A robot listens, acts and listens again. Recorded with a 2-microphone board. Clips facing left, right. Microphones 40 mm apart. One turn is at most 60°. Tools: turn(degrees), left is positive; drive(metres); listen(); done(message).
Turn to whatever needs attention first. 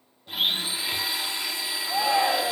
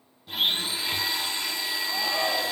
turn(degrees=60)
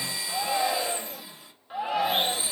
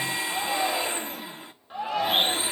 turn(degrees=10)
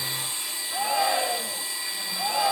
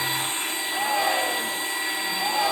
done("Found it: a shout, straight ahead, 2 to 4 m away.")